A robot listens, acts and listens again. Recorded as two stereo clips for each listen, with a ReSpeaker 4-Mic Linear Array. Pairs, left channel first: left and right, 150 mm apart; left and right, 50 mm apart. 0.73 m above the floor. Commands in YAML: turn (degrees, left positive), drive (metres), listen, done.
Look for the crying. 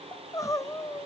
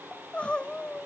turn: 20
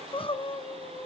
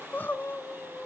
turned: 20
turn: 135
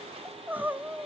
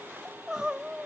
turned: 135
turn: -15
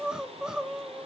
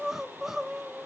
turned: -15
done: "Facing the crying."